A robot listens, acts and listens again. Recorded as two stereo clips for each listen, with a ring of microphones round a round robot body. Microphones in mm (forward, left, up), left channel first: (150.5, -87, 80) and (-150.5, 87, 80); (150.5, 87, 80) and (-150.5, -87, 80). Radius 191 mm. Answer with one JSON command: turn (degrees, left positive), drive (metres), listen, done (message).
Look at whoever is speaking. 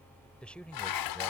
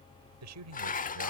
{"turn": -115}
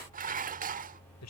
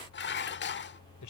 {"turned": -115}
{"done": "Facing the man speaking."}